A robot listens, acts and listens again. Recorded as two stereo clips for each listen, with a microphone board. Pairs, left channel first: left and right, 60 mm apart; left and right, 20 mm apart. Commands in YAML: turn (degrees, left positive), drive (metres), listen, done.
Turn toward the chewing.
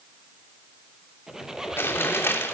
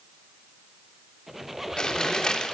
turn: 40
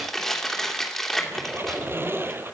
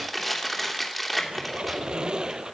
done: "Found it: chewing, straight ahead."